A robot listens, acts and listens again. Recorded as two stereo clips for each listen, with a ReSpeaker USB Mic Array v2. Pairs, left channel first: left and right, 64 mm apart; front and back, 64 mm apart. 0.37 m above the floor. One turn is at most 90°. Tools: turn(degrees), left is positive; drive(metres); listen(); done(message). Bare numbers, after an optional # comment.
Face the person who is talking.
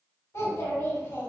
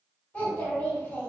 # The child speaking: 60° left.
turn(60)
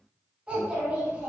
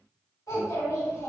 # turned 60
# The child speaking is now 20° right.
turn(-20)
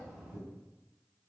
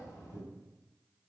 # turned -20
done("Facing the child speaking, 1 to 2 m away.")